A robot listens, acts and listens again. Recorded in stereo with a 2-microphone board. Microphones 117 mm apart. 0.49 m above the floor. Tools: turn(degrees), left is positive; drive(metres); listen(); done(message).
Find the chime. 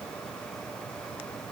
listen()
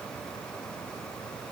listen()
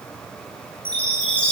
turn(degrees=30)
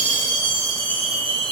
turn(degrees=135)
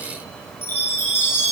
turn(degrees=20)
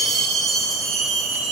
done("Facing the chime.")